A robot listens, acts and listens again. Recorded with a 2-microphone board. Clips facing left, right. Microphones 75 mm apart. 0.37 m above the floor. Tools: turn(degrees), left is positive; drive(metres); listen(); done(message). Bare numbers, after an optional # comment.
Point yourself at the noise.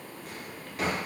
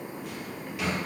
# The drawer: about 40° left or 140° left.
turn(40)
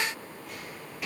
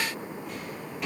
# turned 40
done("Found it: a drawer, straight ahead, 2 to 4 m away.")